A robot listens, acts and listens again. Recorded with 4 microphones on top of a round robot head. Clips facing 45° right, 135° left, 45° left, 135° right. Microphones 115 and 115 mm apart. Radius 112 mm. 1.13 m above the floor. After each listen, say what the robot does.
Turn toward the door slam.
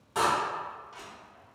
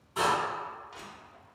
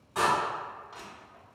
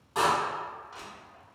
Turn 65° right.
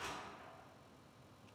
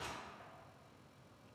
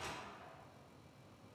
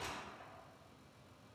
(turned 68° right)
Facing where the door slam came from. I can't hear it now.